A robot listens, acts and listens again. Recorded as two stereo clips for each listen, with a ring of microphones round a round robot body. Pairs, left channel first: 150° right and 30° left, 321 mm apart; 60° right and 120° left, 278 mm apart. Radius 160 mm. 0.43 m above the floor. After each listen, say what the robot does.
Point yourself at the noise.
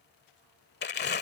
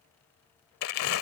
Turn 95° right.
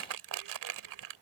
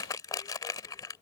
Turn 15° left.
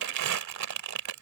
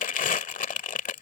Found it: crumpling, straight ahead.